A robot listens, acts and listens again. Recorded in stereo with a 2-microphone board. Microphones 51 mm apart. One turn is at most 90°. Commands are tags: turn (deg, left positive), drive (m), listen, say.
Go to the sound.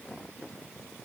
<listen/>
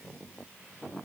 <listen/>
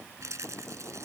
<turn deg="-90"/>
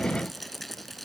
<drive m="1.0"/>
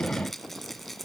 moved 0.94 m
<drive m="1.0"/>
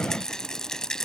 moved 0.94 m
<turn deg="10"/>
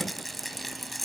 <drive m="1.0"/>
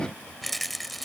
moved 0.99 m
<drive m="1.0"/>
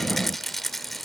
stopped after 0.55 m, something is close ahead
<say>Arrived at the rattle, straight ahead.</say>